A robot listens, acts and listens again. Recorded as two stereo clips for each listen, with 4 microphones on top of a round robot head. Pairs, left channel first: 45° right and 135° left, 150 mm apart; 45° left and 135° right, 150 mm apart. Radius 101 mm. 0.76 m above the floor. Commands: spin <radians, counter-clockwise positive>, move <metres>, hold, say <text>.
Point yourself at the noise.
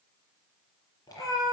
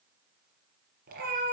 spin -1.92
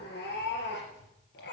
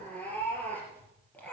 spin -0.61
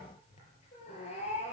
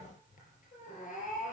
say Found it: a cat meowing, straight ahead.